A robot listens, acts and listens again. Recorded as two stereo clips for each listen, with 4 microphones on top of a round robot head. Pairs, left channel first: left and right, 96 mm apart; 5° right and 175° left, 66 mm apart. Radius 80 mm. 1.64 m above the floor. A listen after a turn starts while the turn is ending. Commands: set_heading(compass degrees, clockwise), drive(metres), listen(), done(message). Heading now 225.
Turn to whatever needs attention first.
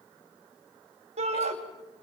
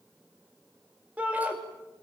set_heading(330)
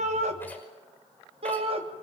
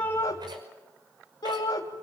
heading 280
set_heading(330)
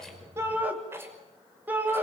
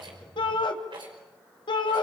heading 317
set_heading(332)
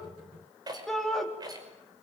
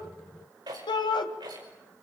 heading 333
done("Facing the shout, 2 to 4 m away.")